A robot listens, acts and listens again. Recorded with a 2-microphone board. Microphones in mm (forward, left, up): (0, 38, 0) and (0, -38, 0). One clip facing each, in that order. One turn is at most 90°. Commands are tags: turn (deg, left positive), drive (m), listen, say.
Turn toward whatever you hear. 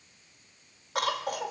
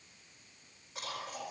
<turn deg="75"/>
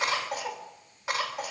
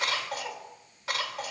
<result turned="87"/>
<turn deg="20"/>
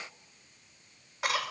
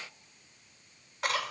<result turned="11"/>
<turn deg="10"/>
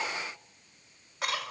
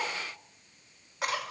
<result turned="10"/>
<say>Facing the cough, over 4 m away.</say>